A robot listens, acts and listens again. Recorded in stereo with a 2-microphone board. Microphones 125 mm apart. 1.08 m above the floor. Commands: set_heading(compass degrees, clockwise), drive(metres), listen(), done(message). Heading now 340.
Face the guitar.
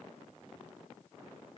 listen()
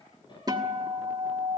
set_heading(10)
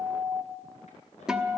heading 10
done("Facing the guitar.")